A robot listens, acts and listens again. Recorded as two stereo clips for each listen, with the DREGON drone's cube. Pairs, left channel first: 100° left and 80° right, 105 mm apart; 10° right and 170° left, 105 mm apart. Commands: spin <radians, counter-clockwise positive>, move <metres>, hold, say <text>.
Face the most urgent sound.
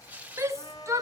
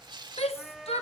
spin -0.26
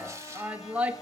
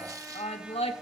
say Facing the shout.